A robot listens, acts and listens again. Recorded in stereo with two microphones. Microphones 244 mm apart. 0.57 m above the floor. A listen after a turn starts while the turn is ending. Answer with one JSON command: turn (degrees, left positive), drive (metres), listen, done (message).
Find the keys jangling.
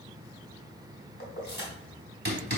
{"turn": 45}
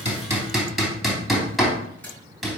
{"listen": true}
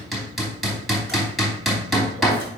{"listen": true}
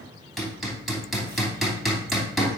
{"done": "I heard keys jangling, but can't make it out now. It was about straight ahead or 90° left."}